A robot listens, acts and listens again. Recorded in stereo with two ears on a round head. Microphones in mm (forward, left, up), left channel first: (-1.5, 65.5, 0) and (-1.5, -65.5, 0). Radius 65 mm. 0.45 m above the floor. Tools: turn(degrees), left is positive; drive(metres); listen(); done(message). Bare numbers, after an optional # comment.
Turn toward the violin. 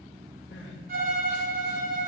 # The violin: about 60° right or 120° right.
turn(-60)
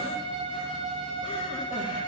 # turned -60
done("Facing the violin, 1 to 2 m away.")